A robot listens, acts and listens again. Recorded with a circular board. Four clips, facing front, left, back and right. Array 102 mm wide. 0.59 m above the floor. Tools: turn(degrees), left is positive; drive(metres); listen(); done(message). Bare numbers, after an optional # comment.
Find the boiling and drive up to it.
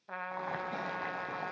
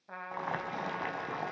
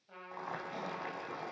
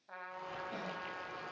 # The boiling: 75° left.
turn(75)
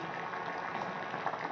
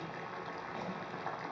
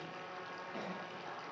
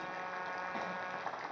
drive(1.0)
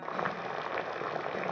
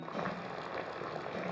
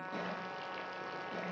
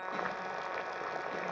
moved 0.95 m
# The boiling is now 10° right.
turn(-10)
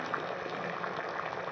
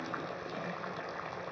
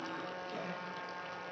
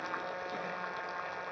drive(1.0)
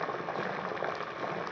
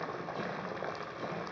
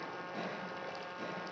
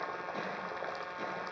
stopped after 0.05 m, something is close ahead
done("I am next to the boiling.")